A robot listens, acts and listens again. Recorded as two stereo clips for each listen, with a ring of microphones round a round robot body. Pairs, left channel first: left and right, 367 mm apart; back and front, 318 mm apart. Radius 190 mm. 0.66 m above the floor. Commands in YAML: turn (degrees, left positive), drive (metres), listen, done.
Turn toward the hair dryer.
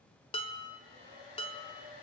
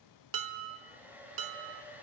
turn: 85
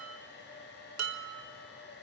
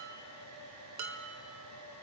turn: 30
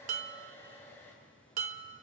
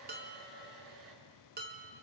done: "Facing the hair dryer."